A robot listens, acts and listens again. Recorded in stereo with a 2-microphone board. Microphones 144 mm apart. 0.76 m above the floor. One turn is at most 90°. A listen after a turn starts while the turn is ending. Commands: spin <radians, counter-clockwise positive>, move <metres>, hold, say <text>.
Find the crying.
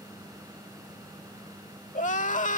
spin 1.05
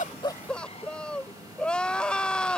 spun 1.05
say Found it: crying, straight ahead.